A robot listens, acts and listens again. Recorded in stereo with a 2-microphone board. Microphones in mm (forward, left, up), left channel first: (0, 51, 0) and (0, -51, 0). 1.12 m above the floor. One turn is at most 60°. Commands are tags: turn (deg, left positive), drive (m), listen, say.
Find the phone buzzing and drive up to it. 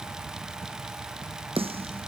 <listen/>
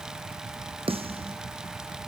<listen/>
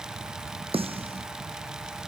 <say>I can't make out a phone buzzing to turn to.</say>